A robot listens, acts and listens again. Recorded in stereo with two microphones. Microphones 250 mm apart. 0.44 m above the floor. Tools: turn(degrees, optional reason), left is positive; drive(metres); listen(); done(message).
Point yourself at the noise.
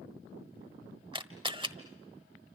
turn(degrees=-20, reason="The camera shutter: about 20° right or 160° right.")
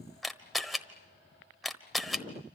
done("Found it: a camera shutter, straight ahead, 1 to 2 m away.")